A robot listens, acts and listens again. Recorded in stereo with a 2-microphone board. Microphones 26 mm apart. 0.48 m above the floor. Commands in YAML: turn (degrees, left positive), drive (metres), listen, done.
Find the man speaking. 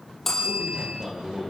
turn: -40
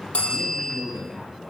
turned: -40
done: "Found it: a man speaking, straight ahead."